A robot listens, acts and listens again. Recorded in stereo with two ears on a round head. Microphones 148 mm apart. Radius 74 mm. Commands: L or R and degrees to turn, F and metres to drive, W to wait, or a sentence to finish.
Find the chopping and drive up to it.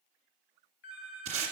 W
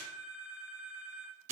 W
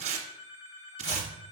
L30
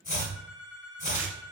L120
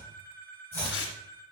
L15
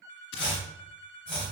F1.0
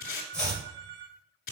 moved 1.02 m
F1.0
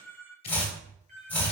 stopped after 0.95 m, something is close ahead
L15
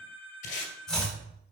Arrived at the chopping, straight ahead.